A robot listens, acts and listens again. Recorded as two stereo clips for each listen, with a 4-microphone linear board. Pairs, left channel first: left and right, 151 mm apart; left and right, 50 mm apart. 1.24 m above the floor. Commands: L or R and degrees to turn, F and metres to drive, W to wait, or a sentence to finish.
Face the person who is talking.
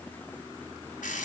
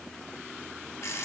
W
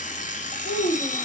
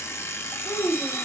L60
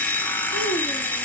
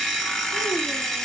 W
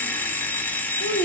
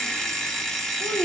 L60
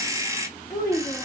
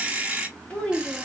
L20
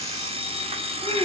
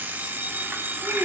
W
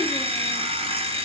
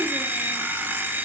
W
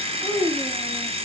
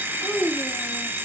Facing the child speaking.